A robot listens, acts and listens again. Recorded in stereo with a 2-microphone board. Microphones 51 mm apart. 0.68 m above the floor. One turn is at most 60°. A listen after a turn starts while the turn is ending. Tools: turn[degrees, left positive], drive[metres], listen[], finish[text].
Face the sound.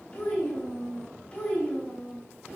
Thought: The child speaking: about 30° left or 150° left.
Action: turn[30]
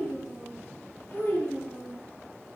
Thought: So it is at 120° left.
Action: turn[60]
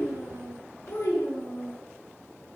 Thought: The child speaking is now 60° left.
Action: turn[60]
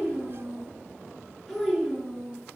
Action: finish[Facing the child speaking, over 4 m away.]